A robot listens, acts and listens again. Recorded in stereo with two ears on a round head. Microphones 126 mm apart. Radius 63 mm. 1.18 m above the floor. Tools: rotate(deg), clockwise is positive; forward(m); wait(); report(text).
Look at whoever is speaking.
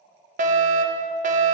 wait()
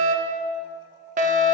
wait()
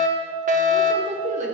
rotate(55)
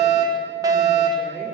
wait()
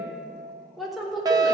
report("Found it: a woman speaking, straight ahead.")